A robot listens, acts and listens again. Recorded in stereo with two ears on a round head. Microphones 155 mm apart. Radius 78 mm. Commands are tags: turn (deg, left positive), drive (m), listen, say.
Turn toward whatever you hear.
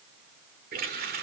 <turn deg="-60"/>
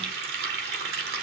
<turn deg="-60"/>
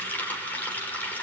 <turn deg="10"/>
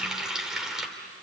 <say>Facing the running tap.</say>